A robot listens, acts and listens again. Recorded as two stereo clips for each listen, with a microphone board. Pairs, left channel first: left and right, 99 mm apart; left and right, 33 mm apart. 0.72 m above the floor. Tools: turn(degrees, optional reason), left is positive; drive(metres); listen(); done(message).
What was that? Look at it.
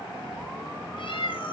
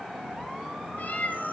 turn(degrees=65, reason="The cat meowing: about 65° left or 115° left.")
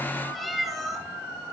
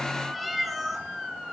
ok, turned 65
done("Found it: a cat meowing, straight ahead, 2 to 4 m away.")